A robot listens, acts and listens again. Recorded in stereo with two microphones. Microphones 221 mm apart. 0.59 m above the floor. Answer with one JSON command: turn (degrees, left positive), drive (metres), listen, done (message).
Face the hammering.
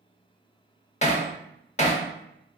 {"turn": 30}
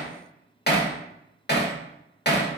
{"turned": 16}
{"turn": 130}
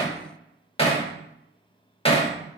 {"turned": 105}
{"turn": 25}
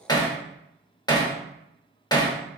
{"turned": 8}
{"turn": 20}
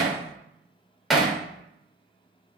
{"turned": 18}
{"done": "Facing the hammering."}